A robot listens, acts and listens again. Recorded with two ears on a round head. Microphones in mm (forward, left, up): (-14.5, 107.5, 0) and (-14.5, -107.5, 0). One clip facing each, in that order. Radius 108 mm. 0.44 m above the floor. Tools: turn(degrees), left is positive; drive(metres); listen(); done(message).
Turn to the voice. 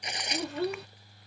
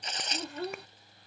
turn(degrees=55)
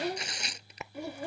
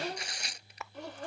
turn(degrees=10)
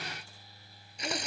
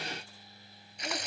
listen()
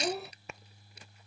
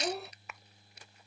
done("Facing the child speaking.")